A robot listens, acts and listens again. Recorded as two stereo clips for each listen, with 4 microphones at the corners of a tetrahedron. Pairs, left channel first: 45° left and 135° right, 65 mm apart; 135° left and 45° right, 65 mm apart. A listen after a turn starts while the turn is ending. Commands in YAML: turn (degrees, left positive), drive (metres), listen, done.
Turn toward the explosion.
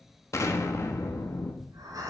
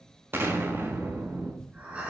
done: "Found it: an explosion, straight ahead, 1 to 2 m away."